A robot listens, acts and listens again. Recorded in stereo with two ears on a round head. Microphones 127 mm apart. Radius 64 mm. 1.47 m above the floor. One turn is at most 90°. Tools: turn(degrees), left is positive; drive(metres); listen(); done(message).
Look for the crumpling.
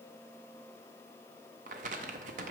turn(degrees=-55)
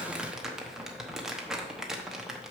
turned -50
done("Found it: crumpling, straight ahead.")